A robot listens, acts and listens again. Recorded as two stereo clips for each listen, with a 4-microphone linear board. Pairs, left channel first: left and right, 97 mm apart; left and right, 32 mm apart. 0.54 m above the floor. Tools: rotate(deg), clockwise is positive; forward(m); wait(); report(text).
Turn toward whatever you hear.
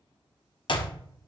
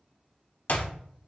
rotate(-60)
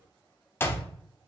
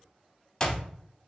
rotate(-30)
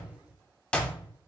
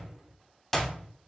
rotate(-15)
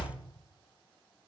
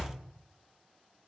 wait()
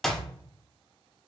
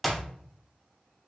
report("Found it: a clap, straight ahead.")